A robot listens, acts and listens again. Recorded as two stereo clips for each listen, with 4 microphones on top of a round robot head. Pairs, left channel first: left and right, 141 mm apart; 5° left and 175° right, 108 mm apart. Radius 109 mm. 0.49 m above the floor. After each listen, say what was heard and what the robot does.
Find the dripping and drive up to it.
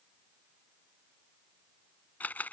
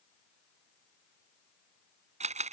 Keep listening.
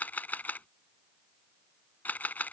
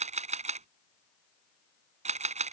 Keep listening.
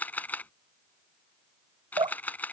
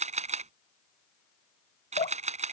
The dripping: 35° right. Turn 35° right.
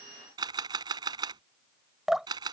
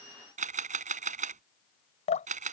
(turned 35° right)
Drive 1.0 m forward.
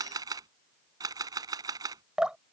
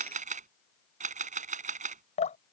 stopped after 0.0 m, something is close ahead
Something is in my way. I am facing the dripping but have not reached it.